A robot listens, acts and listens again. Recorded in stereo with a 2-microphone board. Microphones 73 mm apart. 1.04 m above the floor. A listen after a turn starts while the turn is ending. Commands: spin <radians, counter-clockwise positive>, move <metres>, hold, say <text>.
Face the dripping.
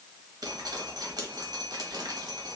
spin -1.13
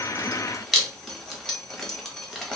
say Facing the dripping.